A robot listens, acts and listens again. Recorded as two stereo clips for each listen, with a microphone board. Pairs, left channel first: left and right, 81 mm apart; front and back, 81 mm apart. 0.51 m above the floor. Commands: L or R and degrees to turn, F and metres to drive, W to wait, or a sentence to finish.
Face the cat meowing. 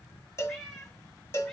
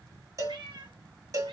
L180
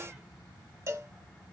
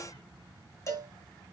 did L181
W
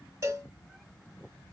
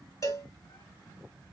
W
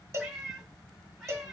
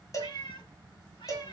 Facing the cat meowing, 1 to 2 m away.